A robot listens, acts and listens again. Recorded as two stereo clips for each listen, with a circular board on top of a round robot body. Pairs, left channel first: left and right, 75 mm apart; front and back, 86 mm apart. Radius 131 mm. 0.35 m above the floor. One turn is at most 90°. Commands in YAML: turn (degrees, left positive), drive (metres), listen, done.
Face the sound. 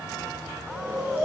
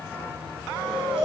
turn: -90
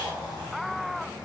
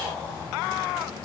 turn: -60
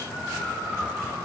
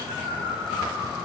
turn: -20
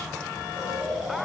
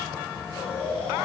done: "Found it: snoring, straight ahead, 1 to 2 m away."